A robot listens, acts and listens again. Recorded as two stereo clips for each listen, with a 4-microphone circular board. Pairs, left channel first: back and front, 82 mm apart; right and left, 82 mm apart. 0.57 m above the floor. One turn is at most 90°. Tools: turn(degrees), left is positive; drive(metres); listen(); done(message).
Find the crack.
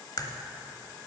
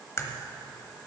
turn(degrees=-90)
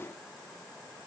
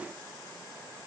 turn(degrees=-55)
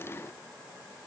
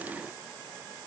done("Facing where the crack came from. I can't hear it now.")